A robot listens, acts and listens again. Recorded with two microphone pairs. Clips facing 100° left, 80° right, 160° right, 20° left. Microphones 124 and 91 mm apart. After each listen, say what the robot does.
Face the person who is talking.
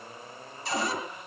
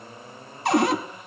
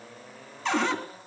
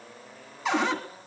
Keep listening.
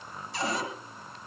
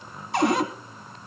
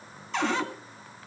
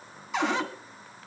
Keep listening.
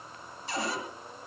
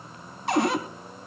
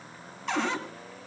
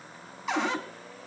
I can't make out anyone speaking to turn to.